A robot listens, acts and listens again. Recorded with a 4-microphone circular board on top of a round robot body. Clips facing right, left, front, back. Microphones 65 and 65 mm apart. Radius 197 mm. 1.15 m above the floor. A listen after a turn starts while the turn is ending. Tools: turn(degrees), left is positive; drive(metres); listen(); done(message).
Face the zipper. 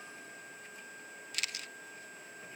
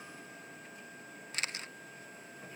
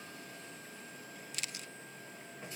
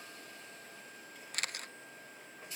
listen()
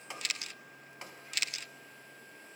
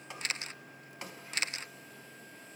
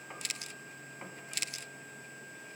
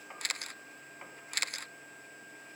listen()
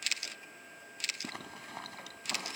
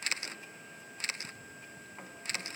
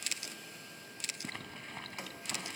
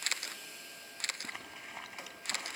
turn(degrees=-95)
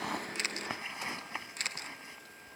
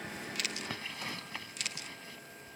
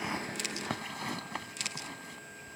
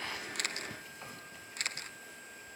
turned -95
turn(degrees=-20)
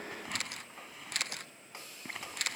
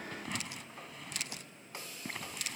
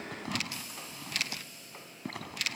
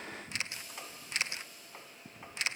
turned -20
done("Found it: a zipper, straight ahead.")